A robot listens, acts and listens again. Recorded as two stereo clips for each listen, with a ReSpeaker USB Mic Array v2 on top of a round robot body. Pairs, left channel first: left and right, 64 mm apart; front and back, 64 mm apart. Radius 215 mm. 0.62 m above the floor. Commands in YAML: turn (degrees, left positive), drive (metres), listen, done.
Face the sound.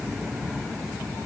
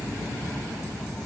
listen: true
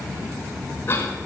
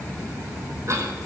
turn: 145
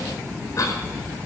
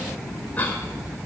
turn: 60
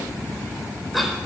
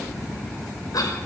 done: "Facing the cough, 2 to 4 m away."